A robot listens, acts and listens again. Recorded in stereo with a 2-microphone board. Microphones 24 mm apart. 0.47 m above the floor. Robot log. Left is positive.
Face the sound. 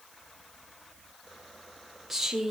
cmd yaw -30
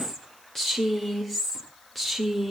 end: Facing the woman speaking.